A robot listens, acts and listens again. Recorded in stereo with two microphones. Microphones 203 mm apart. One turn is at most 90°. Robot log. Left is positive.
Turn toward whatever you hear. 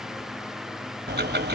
note: The ticking: about 55° right or 125° right.
cmd yaw -55
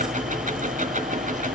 note: So it is at 50° right.
cmd yaw -50
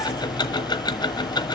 note: The ticking is now 25° left.
cmd yaw +25
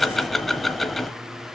end: Facing the ticking, 1 to 2 m away.